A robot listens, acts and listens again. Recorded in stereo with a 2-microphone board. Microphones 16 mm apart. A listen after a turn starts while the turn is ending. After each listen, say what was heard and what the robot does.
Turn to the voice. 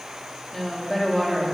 Turn 30° left.
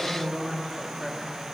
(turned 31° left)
So it is at 160° left. Turn 160° left.
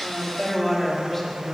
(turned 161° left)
The woman speaking is now 15° left. Turn 15° left.
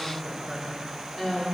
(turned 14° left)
The woman speaking is now 10° left. Turn 10° left.
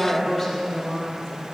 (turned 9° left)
Facing the woman speaking, over 4 m away.